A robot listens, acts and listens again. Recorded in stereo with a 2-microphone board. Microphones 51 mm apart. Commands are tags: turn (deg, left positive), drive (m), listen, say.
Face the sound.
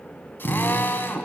<turn deg="50"/>
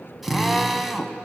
<say>Found it: a drill, straight ahead, 1 to 2 m away.</say>